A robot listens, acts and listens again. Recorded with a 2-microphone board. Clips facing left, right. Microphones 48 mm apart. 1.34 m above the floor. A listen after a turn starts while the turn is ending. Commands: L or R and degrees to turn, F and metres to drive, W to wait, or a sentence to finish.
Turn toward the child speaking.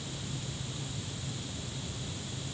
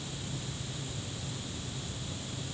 W
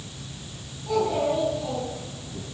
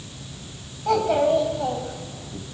R75
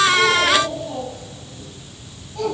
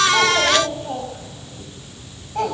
R50
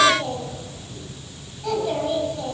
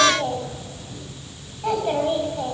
R30
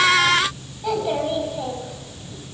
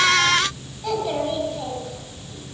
L10
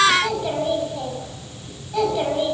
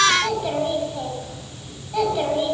Found it: a child speaking, straight ahead, over 4 m away.